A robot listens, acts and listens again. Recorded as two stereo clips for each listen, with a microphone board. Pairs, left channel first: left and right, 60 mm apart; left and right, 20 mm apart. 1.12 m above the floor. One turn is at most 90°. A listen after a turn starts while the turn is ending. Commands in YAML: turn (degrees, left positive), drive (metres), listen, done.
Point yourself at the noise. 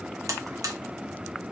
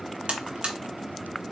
turn: -65
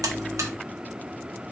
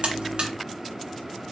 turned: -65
listen: true
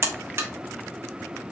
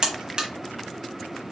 turn: -45
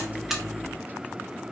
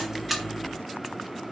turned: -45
listen: true
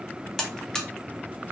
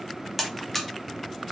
turn: 10
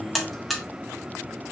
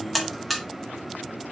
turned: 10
done: "Found it: a buzzer, straight ahead, under 1 m away."